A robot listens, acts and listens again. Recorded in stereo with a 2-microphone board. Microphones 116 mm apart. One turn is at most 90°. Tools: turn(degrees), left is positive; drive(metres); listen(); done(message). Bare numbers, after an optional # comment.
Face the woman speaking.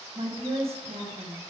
# The woman speaking: about 70° right or 110° right.
turn(-70)
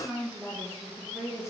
done("Facing the woman speaking, 2 to 4 m away.")